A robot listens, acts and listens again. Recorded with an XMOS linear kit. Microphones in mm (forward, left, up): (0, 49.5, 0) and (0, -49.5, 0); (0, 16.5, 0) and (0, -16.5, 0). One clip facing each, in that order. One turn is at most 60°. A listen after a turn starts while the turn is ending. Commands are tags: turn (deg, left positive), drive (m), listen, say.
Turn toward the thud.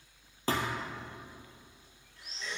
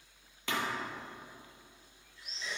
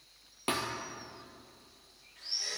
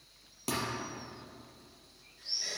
<turn deg="35"/>
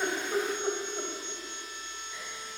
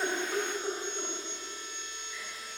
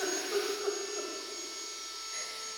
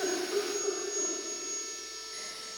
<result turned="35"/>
<listen/>
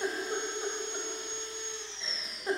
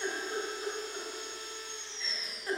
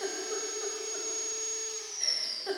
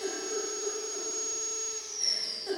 <say>I heard a thud, but can't make it out now. It was about straight ahead or 110° left.</say>